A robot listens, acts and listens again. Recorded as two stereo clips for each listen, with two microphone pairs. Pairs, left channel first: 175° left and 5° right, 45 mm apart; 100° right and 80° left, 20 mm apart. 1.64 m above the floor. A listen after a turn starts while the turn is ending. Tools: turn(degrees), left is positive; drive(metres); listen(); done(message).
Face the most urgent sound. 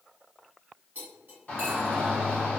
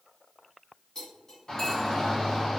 turn(degrees=-140)
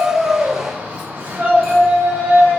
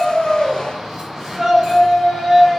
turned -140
done("Facing the shout.")